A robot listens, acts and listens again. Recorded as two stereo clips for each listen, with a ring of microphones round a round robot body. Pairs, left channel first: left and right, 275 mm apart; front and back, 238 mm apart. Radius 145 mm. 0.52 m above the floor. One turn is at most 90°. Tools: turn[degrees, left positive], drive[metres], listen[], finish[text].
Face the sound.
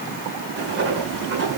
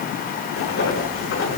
Thought: The writing: 45° right.
Action: turn[-45]
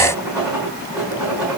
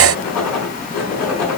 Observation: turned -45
Action: finish[Found it: writing, straight ahead, over 4 m away.]